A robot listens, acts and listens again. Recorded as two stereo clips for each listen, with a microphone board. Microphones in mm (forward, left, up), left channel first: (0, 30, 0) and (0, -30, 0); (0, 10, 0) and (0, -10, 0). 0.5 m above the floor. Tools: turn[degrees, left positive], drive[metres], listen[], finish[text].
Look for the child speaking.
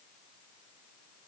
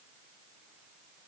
Action: listen[]
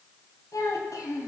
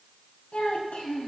Action: turn[90]
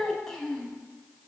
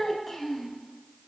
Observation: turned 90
Action: finish[Facing the child speaking.]